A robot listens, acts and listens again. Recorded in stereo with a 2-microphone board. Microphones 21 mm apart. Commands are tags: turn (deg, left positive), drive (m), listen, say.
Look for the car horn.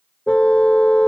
<turn deg="65"/>
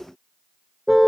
<say>Facing the car horn.</say>